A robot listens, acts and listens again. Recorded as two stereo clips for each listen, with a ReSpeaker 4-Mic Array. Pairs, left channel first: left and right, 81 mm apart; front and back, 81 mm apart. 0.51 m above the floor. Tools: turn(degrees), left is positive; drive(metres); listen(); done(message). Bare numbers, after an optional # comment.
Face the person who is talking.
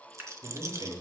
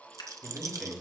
# The man speaking: 100° right.
turn(-100)
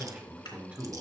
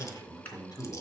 # The man speaking is now 25° right.
turn(-25)
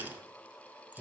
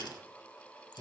# The man speaking is now 10° right.
turn(-10)
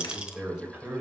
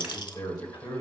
# The man speaking is now 15° right.
turn(-15)
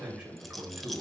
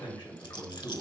# The man speaking is now 20° right.
turn(-20)
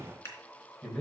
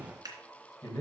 done("Facing the man speaking.")